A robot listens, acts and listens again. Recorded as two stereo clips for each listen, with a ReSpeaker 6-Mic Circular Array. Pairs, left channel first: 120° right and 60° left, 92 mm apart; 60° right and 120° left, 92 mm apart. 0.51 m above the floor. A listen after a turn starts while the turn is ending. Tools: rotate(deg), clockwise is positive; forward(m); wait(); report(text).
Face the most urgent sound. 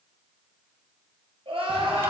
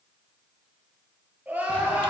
rotate(-50)
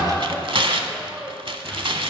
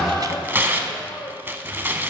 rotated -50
rotate(20)
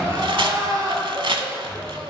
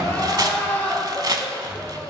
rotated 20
rotate(-10)
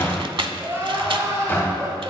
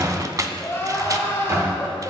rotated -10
report("Found it: crying, straight ahead, 2 to 4 m away.")